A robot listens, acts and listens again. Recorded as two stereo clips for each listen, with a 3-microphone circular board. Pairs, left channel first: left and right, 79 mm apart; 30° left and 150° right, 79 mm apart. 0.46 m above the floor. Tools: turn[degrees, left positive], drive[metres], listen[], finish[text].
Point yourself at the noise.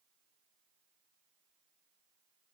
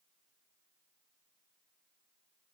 Action: listen[]
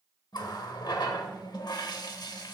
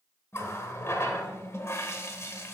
Thought: The running tap: 80° left.
Action: turn[80]
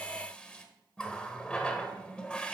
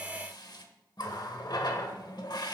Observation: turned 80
Thought: The running tap is now 15° left.
Action: turn[15]
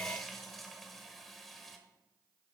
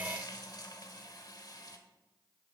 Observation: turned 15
Action: finish[Facing the running tap, 1 to 2 m away.]